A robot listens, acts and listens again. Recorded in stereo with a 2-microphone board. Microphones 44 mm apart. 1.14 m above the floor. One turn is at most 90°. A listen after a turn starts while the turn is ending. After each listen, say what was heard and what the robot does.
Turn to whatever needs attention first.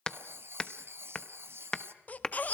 The baby crying: about 35° left or 145° left. Turn 35° left.
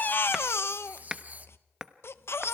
So it is at 110° left. Turn 90° left.
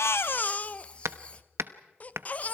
The baby crying is now 40° left. Turn 40° left.
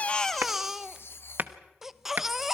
Found it: a baby crying, straight ahead, under 1 m away.